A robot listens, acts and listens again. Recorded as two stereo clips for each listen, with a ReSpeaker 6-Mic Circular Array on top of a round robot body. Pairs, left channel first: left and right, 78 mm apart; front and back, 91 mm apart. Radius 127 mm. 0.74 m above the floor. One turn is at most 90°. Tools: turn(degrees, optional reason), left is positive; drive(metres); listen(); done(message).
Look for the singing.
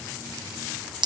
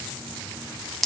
listen()
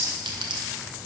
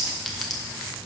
listen()
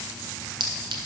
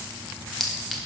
done("I can't make out singing to turn to.")